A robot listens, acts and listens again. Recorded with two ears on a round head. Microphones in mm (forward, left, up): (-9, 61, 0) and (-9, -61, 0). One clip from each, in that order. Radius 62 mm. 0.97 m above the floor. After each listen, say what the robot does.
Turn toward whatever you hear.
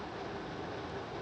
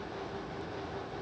Keep listening.
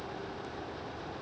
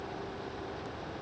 Keep listening.
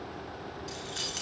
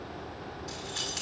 Turn 30° left.
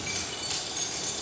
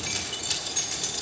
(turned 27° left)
Turn 20° right.
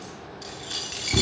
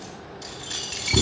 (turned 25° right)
Found it: keys jangling, straight ahead.